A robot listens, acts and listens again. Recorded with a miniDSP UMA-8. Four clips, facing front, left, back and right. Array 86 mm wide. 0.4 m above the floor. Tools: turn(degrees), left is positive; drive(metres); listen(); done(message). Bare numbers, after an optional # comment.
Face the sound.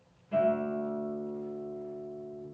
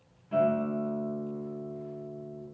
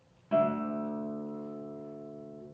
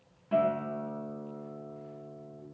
# The guitar: 150° right.
turn(-150)
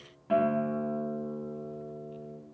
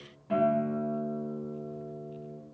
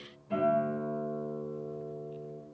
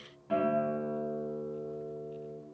done("Found it: a guitar, straight ahead, under 1 m away.")